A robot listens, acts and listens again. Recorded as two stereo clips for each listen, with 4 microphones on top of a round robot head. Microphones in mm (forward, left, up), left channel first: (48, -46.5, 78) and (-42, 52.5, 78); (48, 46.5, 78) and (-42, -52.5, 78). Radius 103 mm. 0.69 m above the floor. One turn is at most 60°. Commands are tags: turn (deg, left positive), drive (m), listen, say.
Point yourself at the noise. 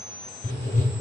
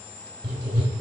<turn deg="-60"/>
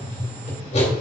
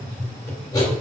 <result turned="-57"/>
<turn deg="-15"/>
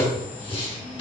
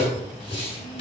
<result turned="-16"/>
<say>Facing the writing.</say>